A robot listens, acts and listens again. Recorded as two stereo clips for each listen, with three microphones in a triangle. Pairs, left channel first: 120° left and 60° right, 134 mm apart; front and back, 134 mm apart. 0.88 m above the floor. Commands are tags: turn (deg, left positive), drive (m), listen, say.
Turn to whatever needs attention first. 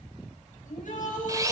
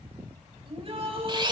<turn deg="135"/>
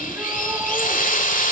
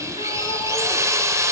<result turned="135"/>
<listen/>
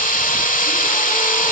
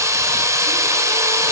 <listen/>
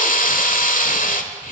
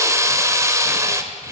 <say>I heard a shout from this way, but can't make it out now.</say>